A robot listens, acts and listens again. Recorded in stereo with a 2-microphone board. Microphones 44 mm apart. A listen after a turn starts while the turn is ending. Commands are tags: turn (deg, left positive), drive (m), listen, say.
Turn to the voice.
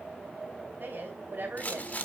<turn deg="-50"/>
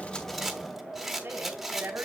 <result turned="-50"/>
<turn deg="-75"/>
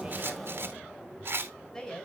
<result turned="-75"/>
<turn deg="20"/>
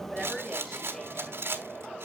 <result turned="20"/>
<say>Found it: a woman speaking, straight ahead.</say>